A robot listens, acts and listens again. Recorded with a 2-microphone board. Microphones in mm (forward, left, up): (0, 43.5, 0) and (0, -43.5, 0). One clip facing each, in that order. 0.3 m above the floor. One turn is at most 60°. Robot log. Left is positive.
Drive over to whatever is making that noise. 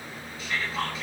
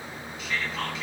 note: The whispering: about 40° left or 140° left.
cmd yaw +40
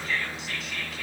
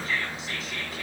cmd fwd 1.0
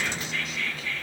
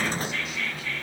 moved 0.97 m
cmd fwd 1.0
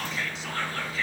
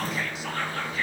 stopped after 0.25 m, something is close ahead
end: Arrived at the whispering, straight ahead.